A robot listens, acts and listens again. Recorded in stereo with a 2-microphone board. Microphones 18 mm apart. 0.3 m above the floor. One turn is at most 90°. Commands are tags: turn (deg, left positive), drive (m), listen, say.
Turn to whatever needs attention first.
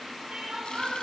<turn deg="-60"/>
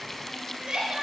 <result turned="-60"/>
<turn deg="-60"/>
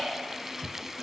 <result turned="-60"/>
<turn deg="-20"/>
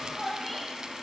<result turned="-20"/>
<say>Found it: crying, straight ahead, over 4 m away.</say>